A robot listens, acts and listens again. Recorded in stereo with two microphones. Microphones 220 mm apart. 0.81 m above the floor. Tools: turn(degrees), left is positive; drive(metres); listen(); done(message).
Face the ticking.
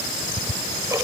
turn(degrees=-30)
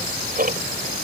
turn(degrees=-135)
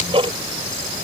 turn(degrees=-25)
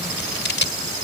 listen()
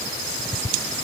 done("Found it: ticking, straight ahead.")